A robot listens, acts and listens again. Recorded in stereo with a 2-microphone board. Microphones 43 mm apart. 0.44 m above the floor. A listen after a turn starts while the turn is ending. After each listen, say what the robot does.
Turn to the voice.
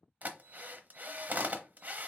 Keep listening.
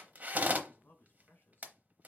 Turn 55° left.
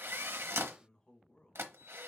Turn 25° left.
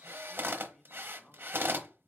Keep listening.
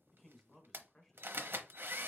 Facing the man speaking, 1 to 2 m away.